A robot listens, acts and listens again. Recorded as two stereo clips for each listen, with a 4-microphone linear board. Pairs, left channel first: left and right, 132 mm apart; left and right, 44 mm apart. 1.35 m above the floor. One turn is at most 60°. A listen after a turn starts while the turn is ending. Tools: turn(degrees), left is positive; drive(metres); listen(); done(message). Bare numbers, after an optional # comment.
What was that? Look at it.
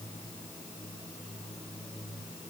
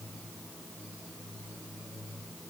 listen()
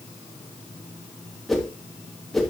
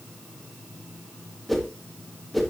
turn(30)
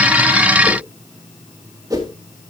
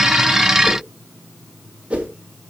# So it is at 30° right.
turn(-30)
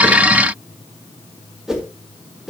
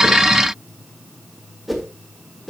done("Found it: a whoosh, straight ahead.")